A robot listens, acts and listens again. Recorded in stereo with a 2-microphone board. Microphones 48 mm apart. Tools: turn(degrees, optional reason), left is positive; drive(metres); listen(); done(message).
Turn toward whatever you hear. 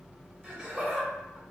turn(degrees=-25, reason="The laughter: about 25° right or 155° right.")
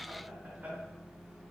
listen()
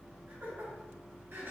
turn(degrees=-120, reason="So it is at 120° right.")
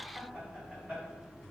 turn(degrees=-30, reason="The laughter is now 30° right.")
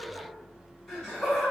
turn(degrees=10, reason="The laughter is now 10° left.")
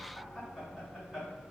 done("Facing the laughter, 2 to 4 m away.")